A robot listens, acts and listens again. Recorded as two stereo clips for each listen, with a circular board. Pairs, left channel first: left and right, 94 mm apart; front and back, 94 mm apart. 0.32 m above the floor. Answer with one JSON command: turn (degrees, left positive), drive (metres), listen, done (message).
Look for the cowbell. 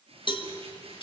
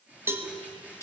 {"turn": 115}
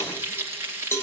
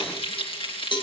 {"turn": 30}
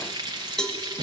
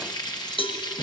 {"turn": 10}
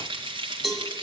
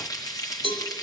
{"done": "Facing the cowbell, 2 to 4 m away."}